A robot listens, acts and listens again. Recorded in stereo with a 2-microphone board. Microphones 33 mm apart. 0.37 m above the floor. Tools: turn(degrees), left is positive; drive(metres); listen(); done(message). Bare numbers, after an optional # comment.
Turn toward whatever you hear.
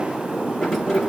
turn(30)
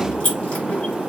# So it is at 145° left.
turn(145)
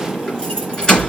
# The keys jangling is now 25° left.
turn(25)
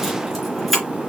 done("Found it: keys jangling, straight ahead, 2 to 4 m away.")